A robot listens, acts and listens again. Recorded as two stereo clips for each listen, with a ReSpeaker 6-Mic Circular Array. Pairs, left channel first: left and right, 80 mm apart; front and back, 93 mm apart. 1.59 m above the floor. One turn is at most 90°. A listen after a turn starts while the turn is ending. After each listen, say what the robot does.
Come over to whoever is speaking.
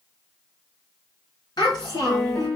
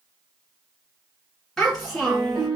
Turn 90° left.
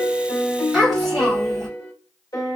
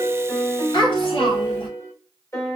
Drive 1.0 m forward.
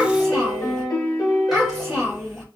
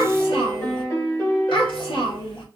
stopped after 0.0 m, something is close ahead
Blocked. The child speaking is further on, straight ahead.